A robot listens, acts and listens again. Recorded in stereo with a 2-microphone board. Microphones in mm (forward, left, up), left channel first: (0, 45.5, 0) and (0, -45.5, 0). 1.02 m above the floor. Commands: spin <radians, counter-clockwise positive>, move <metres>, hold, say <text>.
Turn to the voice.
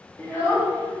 spin 0.44
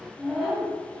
say Found it: a child speaking, straight ahead, under 1 m away.